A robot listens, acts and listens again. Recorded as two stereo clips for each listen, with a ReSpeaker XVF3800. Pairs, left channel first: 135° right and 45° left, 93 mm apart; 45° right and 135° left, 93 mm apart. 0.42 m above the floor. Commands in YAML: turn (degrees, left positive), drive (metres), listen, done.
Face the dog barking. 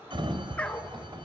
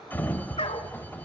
turn: -60
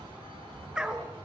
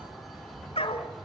turn: -35
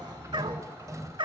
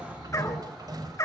turn: 15
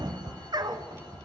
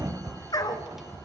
done: "Found it: a dog barking, straight ahead."